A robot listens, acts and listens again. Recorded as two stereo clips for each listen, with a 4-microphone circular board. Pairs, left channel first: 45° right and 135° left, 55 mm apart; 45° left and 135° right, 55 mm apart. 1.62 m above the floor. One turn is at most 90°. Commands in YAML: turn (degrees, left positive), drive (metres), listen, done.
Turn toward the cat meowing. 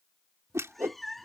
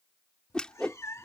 turn: 40
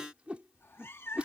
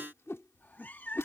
done: "Facing the cat meowing."